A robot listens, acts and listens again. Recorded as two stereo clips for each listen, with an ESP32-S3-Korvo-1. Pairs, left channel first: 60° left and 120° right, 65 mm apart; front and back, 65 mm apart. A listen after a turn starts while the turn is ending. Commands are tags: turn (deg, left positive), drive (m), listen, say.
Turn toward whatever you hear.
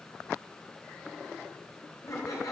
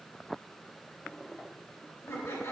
<turn deg="45"/>
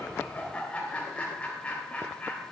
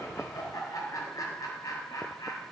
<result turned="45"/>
<turn deg="-10"/>
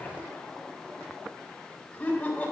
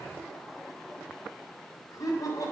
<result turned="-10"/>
<say>Found it: laughter, straight ahead, 2 to 4 m away.</say>